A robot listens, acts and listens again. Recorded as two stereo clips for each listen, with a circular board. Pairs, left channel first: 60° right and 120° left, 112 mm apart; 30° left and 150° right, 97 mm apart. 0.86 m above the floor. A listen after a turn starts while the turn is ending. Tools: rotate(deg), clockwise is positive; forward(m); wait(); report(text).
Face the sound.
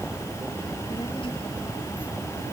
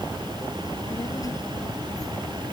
rotate(20)
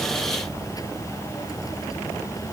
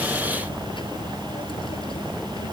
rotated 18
wait()
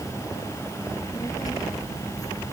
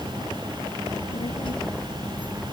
report("Found it: a child speaking, straight ahead.")